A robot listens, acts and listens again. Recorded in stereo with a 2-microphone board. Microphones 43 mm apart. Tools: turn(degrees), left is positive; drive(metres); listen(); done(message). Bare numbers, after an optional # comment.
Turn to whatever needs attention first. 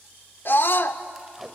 # The scream: about 60° left or 120° left.
turn(60)
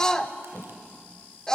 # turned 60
# So it is at 20° left.
turn(20)
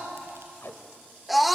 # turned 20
done("Found it: a scream, straight ahead.")